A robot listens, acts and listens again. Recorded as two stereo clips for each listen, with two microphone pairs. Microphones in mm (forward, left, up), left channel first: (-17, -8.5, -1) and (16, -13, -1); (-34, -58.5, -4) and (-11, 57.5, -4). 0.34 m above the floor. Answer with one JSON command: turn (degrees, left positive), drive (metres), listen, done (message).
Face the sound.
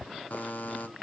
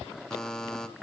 {"turn": 175}
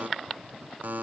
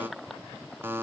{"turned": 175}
{"turn": 10}
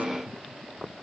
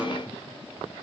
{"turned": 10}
{"listen": true}
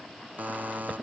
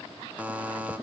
{"done": "Facing the buzzer."}